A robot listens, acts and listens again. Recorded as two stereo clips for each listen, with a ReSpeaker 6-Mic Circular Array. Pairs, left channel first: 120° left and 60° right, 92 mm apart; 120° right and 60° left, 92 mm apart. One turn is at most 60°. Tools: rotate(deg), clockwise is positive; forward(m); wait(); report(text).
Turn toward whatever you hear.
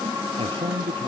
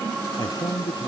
rotate(60)
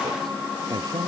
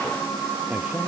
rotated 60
rotate(15)
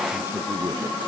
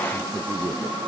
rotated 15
wait()
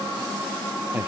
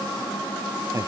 report("Found it: a man speaking, straight ahead.")